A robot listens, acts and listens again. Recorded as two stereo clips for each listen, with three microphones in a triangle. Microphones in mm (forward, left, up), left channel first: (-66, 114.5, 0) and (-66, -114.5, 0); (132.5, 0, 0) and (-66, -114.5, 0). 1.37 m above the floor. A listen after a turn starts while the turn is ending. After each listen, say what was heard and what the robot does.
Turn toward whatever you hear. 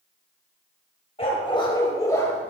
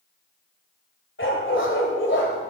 The dog barking: 15° left. Turn 15° left.
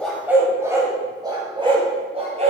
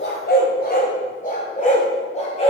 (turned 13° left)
The dog barking is now 30° right. Turn 30° right.
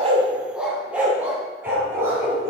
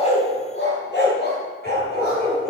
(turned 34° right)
The dog barking is now 15° right. Turn 15° right.
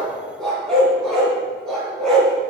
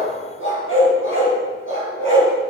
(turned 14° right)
Found it: a dog barking, straight ahead.